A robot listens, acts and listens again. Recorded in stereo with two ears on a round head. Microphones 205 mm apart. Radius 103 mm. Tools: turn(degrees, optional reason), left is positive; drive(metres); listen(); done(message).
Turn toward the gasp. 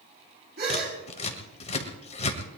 turn(degrees=-45, reason="The gasp: about 45° right or 135° right.")
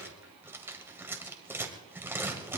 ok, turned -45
listen()
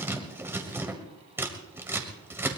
done("I heard a gasp, but can't make it out now. It was about straight ahead or 90° right.")